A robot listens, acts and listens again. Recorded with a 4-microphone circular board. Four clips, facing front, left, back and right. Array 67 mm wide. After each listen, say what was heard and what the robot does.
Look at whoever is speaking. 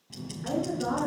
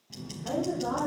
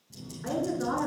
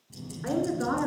The woman speaking: 100° right. Turn 100° right.
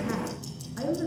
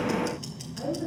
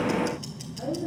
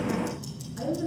Found it: a woman speaking, straight ahead.